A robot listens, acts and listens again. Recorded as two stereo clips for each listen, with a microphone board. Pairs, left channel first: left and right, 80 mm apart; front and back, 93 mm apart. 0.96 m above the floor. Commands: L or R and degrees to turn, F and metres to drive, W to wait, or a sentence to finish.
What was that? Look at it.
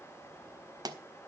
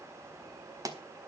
R130
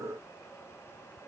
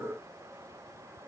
Facing where the pop came from. I can't hear it now.